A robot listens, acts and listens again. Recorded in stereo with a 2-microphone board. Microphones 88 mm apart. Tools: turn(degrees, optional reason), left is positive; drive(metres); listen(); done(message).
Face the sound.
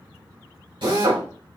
turn(degrees=-70, reason="The drill: about 70° right or 110° right.")
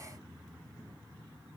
listen()
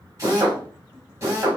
turn(degrees=-35, reason="So it is at 35° right.")
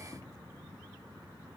listen()
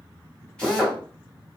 turn(degrees=10, reason="The drill is now 10° left.")
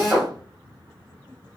done("Found it: a drill, straight ahead.")